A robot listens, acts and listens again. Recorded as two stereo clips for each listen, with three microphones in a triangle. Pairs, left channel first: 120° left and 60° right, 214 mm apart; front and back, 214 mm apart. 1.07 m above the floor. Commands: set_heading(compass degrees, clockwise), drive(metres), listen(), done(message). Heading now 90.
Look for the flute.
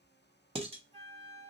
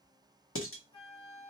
set_heading(25)
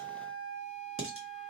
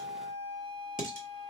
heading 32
done("Found it: a flute, straight ahead, 1 to 2 m away.")